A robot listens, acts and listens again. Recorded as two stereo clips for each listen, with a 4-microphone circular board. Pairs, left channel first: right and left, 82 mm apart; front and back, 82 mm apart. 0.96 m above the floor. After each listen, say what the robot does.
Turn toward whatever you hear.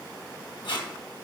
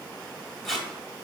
Turn 85° right.
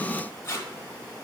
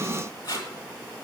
Turn 35° right.
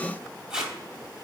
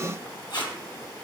Turn 10° left.
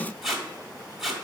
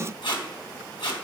Facing the tape being pulled.